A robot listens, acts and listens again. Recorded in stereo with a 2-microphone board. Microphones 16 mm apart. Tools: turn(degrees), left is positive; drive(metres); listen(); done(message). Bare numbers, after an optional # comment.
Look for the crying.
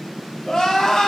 # The crying: about 60° left or 120° left.
turn(60)
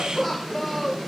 done("Facing the crying.")